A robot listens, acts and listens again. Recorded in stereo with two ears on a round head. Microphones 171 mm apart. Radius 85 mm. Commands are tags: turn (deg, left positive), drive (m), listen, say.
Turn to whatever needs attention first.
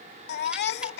<turn deg="60"/>
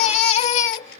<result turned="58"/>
<turn deg="40"/>
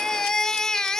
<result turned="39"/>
<say>Found it: a baby crying, straight ahead.</say>